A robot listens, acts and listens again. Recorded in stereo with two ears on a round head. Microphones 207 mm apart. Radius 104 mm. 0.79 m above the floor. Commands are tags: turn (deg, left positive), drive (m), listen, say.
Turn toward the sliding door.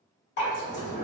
<turn deg="30"/>
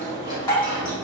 <turn deg="-20"/>
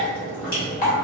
<say>Facing the sliding door.</say>